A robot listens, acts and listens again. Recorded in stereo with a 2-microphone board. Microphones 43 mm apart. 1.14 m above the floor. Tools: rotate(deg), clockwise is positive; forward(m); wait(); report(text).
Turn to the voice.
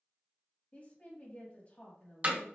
rotate(-35)
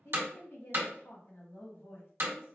rotate(-110)
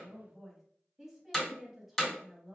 report("Found it: a woman speaking, straight ahead, 1 to 2 m away.")